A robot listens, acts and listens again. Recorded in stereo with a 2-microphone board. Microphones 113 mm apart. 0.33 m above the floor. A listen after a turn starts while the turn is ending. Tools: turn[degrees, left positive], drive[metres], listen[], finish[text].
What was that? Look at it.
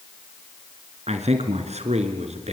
Action: turn[-90]
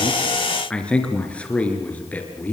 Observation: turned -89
Thought: So it is at 15° left.
Action: turn[15]
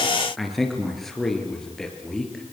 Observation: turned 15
Action: finish[Found it: a man speaking, straight ahead.]